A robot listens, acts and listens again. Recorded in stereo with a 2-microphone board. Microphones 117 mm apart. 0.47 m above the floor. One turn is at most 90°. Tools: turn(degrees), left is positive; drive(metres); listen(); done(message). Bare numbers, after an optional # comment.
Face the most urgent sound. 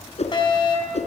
# The fire alarm: about 40° left or 140° left.
turn(40)
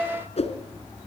done("Found it: a fire alarm, straight ahead, over 4 m away.")